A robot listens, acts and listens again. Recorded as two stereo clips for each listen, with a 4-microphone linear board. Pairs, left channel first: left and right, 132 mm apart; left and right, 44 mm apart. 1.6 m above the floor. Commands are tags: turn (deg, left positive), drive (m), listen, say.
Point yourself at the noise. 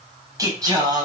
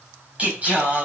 <turn deg="-30"/>
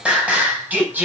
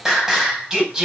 <turn deg="-15"/>
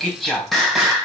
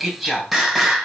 <say>Found it: singing, straight ahead, over 4 m away.</say>